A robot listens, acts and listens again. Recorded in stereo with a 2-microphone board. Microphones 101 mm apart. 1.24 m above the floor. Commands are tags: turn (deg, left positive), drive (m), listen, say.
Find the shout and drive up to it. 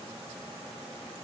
<listen/>
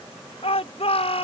<turn deg="70"/>
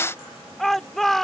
<drive m="1.0"/>
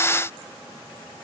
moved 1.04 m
<listen/>
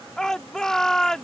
<drive m="1.0"/>
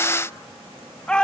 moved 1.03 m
<turn deg="10"/>
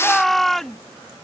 <drive m="1.0"/>
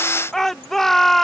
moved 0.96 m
<drive m="1.0"/>
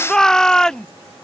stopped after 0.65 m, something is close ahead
<say>Arrived at the shout, straight ahead.</say>